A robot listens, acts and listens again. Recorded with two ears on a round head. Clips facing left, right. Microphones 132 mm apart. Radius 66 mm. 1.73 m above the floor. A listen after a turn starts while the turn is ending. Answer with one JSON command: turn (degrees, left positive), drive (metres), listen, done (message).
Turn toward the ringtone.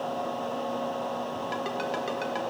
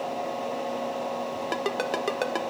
{"turn": -60}
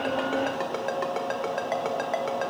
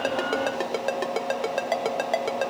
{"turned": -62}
{"turn": -40}
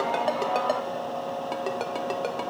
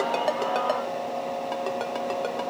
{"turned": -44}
{"listen": true}
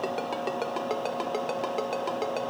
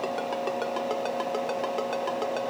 {"done": "Facing the ringtone."}